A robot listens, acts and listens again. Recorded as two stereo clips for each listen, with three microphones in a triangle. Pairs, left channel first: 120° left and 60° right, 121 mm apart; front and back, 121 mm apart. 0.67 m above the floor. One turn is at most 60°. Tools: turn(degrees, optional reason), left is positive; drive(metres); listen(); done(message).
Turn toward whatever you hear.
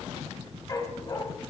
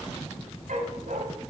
turn(degrees=60, reason="The dog barking: straight behind.")
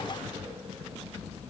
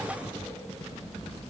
turn(degrees=60, reason="Nothing new. It was at 120° left.")
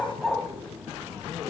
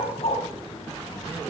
turn(degrees=30, reason="The dog barking is now 30° left.")
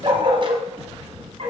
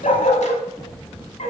turn(degrees=-20, reason="The dog barking is now 20° right.")
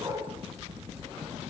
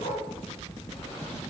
done("Found it: a dog barking, straight ahead, 2 to 4 m away.")